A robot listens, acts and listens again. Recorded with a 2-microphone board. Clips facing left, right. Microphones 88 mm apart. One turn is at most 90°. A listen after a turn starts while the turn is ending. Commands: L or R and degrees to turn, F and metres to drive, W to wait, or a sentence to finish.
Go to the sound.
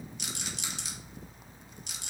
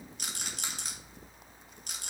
R50
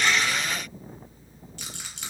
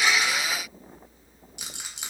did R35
R15
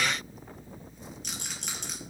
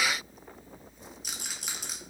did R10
F1.0
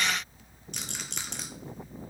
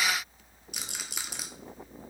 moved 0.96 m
R10
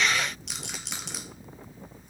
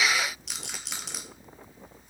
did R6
F1.0
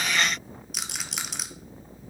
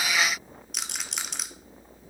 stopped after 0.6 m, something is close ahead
Arrived at the rattle, straight ahead.